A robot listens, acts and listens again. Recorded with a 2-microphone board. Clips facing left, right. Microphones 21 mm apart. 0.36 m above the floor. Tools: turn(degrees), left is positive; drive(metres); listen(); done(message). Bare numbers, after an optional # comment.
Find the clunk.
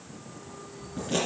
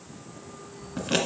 listen()
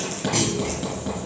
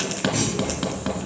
# The clunk: about 50° left or 130° left.
turn(50)
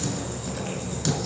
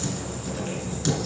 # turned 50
listen()
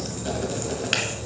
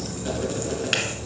done("I heard a clunk, but can't make it out now. It was about straight ahead or 80° left.")